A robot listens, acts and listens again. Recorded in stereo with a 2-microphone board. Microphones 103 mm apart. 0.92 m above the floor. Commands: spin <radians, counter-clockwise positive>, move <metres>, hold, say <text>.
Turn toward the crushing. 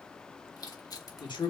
spin 0.70
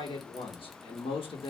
hold
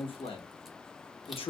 hold
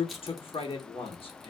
say I heard crushing, but can't make it out now. It was about straight ahead or 100° left.